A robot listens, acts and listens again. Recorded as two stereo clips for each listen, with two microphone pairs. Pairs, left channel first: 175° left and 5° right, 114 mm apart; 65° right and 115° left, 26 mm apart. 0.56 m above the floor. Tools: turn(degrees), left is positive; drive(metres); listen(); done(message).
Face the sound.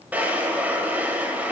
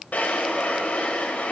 turn(degrees=-75)
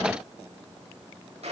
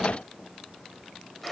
listen()
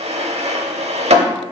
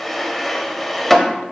turn(degrees=20)
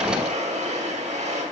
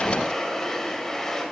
turn(degrees=10)
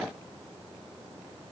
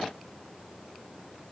listen()
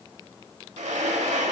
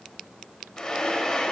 done("Found it: a drawer, straight ahead, under 1 m away.")